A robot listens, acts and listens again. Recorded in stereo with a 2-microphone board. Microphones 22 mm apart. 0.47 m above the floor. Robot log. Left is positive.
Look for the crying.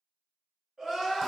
note: The crying: about 30° right or 150° right.
cmd yaw -30
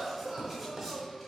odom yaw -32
note: So it is at 115° right.
cmd yaw -115
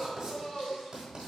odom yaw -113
end: Found it: crying, straight ahead, 1 to 2 m away.